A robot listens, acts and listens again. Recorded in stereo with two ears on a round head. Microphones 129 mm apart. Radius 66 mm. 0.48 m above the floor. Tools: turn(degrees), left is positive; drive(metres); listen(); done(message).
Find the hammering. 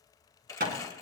turn(degrees=-65)
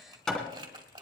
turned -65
done("Found it: hammering, straight ahead.")